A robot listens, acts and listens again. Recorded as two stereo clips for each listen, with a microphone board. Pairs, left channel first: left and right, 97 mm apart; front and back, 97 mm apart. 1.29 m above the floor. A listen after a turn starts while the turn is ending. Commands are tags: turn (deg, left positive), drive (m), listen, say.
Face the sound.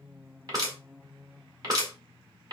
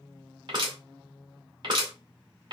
<turn deg="-140"/>
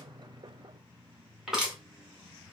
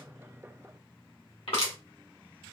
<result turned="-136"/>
<say>Found it: crushing, straight ahead, 1 to 2 m away.</say>